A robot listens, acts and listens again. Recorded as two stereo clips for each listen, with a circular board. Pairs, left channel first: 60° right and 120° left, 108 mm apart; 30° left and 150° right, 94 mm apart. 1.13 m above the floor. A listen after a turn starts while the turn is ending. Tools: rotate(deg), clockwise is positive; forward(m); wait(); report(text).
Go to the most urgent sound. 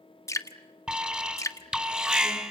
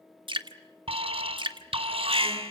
rotate(160)
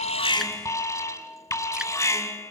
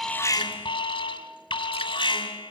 forward(1.0)
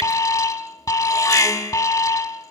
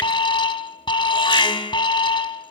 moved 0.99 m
forward(1.0)
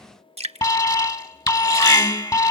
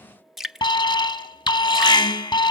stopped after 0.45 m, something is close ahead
rotate(10)
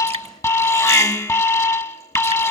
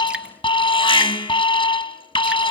report("Arrived at the alarm, straight ahead.")